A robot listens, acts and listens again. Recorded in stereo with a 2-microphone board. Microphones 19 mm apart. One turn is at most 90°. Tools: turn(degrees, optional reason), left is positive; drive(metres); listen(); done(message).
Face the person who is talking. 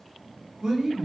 turn(degrees=-45, reason="The man speaking: about 45° right or 135° right.")
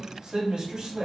turn(degrees=-80, reason="So it is at 80° right.")
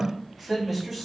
done("Facing the man speaking.")